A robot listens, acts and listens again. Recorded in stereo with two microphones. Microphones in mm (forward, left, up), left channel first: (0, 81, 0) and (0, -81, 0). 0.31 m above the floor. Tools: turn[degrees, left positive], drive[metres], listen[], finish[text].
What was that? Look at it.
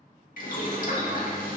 Thought: The boiling: about 55° left or 125° left.
Action: turn[55]
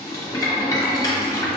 Thought: So it is at 25° left.
Action: turn[25]
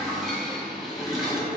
Action: finish[Found it: boiling, straight ahead, under 1 m away.]